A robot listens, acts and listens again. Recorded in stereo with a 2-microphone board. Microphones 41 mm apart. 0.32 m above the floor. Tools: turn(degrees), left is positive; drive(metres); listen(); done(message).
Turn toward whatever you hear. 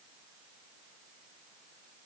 listen()
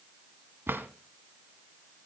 turn(degrees=-65)
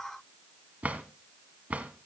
turn(degrees=-40)
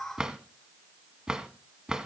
turn(degrees=-20)
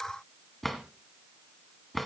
done("Facing the drawer.")